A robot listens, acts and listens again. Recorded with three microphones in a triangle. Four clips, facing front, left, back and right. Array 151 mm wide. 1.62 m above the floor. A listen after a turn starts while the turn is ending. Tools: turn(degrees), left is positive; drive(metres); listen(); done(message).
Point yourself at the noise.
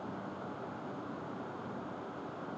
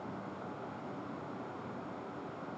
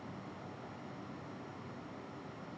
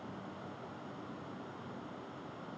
listen()
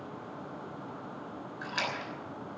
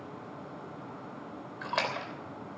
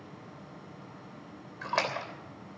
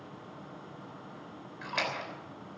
turn(degrees=155)
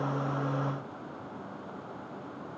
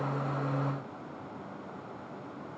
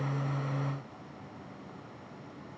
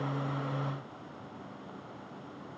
done("Facing where the splash came from. I can't hear it now.")